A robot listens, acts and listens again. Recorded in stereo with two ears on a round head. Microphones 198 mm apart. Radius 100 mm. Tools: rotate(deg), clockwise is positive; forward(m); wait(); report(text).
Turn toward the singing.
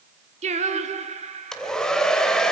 rotate(30)
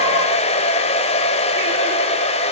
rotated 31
wait()
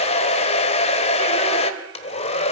wait()
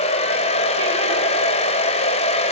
report("I heard singing, but can't make it out now. It was about straight ahead or 115° right.")